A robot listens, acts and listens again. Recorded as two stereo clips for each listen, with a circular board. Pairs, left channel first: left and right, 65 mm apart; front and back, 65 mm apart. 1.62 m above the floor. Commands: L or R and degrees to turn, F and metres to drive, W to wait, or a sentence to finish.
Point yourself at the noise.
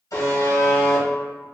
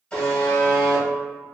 L75
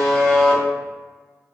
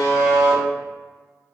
L10
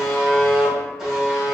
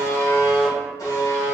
Facing the buzzer.